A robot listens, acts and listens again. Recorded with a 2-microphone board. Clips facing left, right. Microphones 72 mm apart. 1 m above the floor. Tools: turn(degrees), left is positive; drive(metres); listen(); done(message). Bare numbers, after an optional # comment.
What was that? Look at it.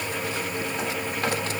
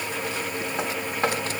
listen()
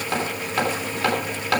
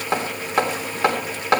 # The hammering: about 25° right or 155° right.
turn(-25)
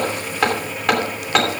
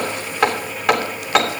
done("Facing the hammering, 2 to 4 m away.")